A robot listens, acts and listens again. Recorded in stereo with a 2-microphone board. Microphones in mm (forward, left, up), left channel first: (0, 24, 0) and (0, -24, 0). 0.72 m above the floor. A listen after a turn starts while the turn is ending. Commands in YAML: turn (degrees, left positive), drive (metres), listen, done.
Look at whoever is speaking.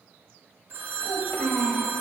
turn: 50
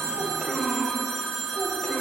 turn: 20
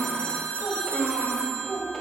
turn: 10
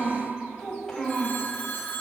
turn: 10
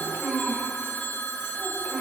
done: "Facing the child speaking, 2 to 4 m away."